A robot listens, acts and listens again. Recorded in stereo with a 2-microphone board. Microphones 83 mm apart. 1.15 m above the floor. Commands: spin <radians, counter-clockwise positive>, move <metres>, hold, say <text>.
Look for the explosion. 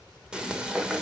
hold
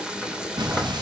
spin -1.05
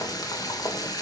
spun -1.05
hold
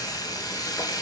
say I heard an explosion, but can't make it out now. It was about straight ahead or 60° right.